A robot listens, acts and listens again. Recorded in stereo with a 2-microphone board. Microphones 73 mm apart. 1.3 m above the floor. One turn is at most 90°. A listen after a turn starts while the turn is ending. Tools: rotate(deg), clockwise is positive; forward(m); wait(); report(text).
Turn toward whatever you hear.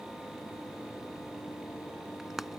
rotate(30)
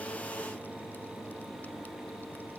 wait()
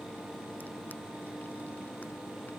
wait()
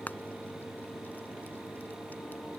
rotate(-25)
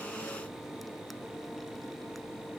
wait()
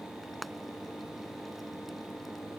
report("Facing the frying.")